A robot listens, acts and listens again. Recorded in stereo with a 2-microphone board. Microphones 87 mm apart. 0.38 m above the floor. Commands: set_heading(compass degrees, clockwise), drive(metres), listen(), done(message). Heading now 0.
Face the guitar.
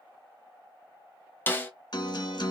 set_heading(305)
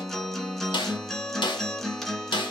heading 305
done("Facing the guitar.")